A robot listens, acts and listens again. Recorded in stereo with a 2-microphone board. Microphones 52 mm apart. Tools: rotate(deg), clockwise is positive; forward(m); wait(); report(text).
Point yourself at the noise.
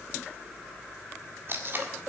rotate(45)
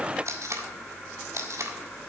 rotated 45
rotate(85)
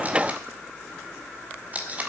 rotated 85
rotate(30)
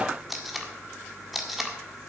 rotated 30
report("Facing the tape being pulled, 1 to 2 m away.")